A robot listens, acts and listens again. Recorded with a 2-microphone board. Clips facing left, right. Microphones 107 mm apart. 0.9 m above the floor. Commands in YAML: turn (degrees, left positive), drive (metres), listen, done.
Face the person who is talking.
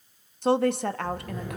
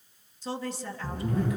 turn: 65
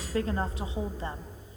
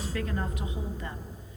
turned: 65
listen: true
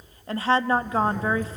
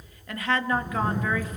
turn: 35
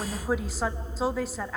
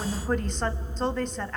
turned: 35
done: "Facing the woman speaking."